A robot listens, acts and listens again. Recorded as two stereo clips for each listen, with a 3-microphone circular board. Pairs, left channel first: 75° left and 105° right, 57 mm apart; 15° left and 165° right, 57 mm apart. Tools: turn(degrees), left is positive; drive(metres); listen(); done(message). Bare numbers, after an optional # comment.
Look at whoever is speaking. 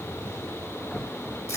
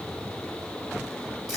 listen()
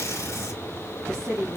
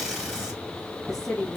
# The woman speaking: 70° right.
turn(-70)
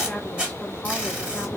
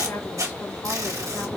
listen()
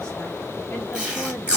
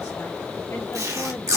listen()
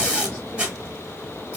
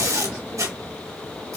done("Facing where the woman speaking came from. I can't hear it now.")